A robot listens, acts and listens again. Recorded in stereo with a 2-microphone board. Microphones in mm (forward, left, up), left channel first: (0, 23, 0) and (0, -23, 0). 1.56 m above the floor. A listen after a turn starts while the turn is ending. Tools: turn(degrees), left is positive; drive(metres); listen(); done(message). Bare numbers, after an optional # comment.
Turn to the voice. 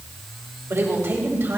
# The woman speaking: about 70° right or 110° right.
turn(-70)
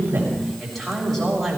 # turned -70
done("Found it: a woman speaking, straight ahead.")